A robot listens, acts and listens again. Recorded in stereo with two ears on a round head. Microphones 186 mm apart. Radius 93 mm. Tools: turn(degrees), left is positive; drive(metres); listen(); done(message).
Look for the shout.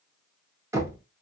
listen()
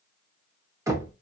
listen()
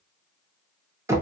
done("I can't make out a shout to turn to.")